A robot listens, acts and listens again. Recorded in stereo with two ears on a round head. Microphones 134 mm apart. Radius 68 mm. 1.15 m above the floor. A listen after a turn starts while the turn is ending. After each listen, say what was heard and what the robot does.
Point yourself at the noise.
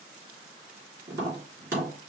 The tapping: about 20° right or 160° right. Turn 20° right.
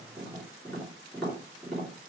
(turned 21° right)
Found it: tapping, straight ahead, 2 to 4 m away.